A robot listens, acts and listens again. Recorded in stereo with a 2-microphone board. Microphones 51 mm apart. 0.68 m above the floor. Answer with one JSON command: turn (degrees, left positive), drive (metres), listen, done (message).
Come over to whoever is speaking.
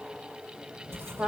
{"listen": true}
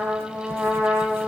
{"listen": true}
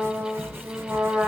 {"done": "I can't make out anyone speaking to turn to."}